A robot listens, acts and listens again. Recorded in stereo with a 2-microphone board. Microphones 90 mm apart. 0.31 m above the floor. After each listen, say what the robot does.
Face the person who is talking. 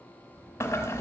Turn 25° right.
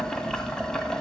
Keep listening.
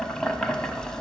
Keep listening.
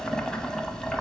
I heard a child speaking, but can't make it out now. It was about straight ahead or 130° right.